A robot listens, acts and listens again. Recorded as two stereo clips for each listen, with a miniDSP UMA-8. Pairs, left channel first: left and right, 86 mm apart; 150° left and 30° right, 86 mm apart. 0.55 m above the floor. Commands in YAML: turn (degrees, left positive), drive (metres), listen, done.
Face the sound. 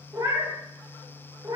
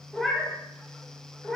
turn: -125
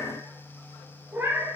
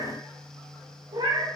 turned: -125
turn: -30
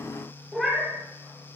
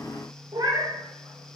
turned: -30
done: "Found it: a cat meowing, straight ahead."